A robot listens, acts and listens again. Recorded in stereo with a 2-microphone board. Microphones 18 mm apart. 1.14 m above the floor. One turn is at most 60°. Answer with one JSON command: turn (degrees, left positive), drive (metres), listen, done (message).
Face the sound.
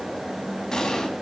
{"turn": 45}
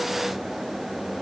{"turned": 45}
{"listen": true}
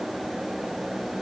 {"done": "I heard an explosion, but can't make it out now. It was about straight ahead or 90° left."}